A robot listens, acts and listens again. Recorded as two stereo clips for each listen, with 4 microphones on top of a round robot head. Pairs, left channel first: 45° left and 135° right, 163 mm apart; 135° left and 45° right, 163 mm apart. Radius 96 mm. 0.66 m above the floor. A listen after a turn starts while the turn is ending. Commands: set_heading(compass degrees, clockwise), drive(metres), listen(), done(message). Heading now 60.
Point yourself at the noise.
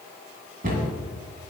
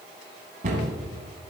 set_heading(150)
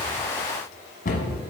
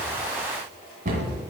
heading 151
done("Facing the cupboard door, 2 to 4 m away.")